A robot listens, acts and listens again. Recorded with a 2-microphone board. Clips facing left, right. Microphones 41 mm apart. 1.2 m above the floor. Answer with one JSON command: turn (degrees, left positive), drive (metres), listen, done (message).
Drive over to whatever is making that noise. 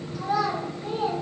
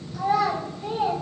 {"turn": -90}
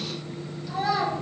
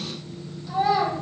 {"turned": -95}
{"drive": 1.0}
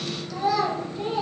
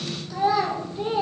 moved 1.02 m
{"turn": -20}
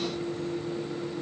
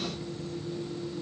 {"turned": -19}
{"listen": true}
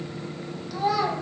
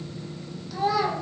{"drive": 1.0}
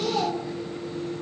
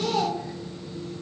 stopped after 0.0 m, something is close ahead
{"done": "Arrived at the child speaking, straight ahead."}